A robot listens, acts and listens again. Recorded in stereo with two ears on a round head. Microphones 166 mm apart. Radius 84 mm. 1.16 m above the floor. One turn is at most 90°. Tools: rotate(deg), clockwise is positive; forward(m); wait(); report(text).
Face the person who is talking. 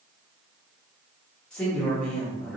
rotate(-30)
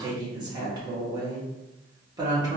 rotate(25)
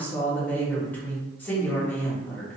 rotate(-10)
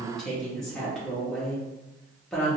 report("Found it: a woman speaking, straight ahead.")